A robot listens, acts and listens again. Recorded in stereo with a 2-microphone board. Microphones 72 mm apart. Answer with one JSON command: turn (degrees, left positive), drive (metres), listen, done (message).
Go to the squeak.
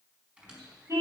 {"turn": -15}
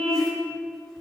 {"listen": true}
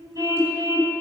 {"listen": true}
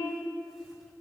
{"done": "I heard a squeak, but can't make it out now. It was about straight ahead or 150° right. I did not reach it."}